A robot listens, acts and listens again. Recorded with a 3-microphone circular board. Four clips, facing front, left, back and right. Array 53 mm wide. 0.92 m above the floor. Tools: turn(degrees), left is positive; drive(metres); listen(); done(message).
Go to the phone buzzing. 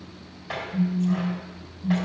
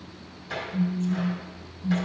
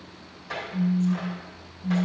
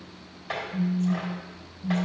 turn(degrees=-110)
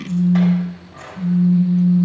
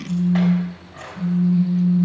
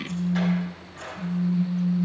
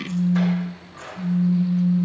turn(degrees=10)
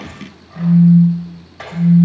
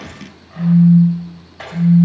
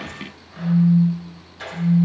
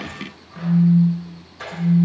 drive(metres=1.0)
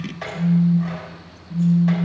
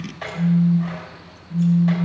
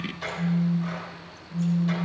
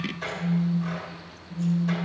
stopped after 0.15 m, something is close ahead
done("Blocked. The phone buzzing is further on, straight ahead.")